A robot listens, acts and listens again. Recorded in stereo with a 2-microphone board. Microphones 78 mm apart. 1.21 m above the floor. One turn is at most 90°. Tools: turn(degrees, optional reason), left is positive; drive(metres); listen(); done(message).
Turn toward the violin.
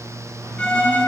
turn(degrees=30)
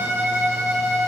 turn(degrees=-20, reason="So it is at 20° right.")
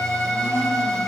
done("Found it: a violin, straight ahead, 2 to 4 m away.")